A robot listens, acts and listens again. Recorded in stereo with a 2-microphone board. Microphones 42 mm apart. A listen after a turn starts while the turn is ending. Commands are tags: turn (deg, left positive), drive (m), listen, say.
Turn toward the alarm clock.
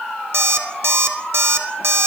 <turn deg="-90"/>
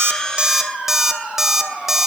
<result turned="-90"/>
<turn deg="-10"/>
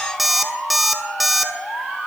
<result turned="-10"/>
<say>Facing the alarm clock, under 1 m away.</say>